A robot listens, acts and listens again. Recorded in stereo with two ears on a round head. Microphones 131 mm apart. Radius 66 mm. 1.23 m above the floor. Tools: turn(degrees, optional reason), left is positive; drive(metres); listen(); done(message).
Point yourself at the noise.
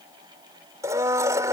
turn(degrees=-20, reason="The blender: about 20° right or 160° right.")
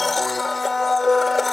done("Facing the blender.")